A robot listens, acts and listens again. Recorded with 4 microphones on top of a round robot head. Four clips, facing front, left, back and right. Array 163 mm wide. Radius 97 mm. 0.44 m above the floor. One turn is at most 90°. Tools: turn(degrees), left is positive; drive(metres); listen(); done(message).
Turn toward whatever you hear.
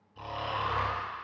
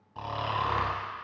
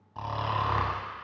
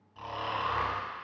turn(degrees=90)
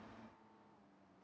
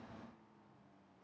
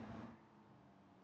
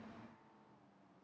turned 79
turn(degrees=65)
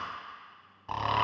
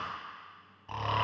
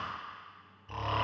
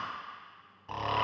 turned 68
done("Facing the snoring, 1 to 2 m away.")